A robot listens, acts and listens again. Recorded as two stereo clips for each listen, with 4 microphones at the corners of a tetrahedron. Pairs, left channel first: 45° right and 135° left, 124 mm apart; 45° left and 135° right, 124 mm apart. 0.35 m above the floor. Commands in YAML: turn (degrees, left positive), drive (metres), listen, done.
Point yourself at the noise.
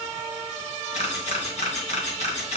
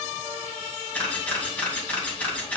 turn: -30
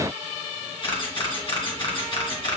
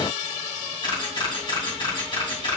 done: "Found it: a camera shutter, straight ahead."